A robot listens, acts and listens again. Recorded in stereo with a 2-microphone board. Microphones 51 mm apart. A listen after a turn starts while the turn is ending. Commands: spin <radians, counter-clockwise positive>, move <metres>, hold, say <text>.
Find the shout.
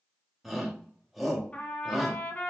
spin 0.52
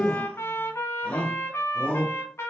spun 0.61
spin 2.62
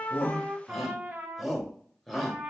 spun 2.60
say Facing the shout.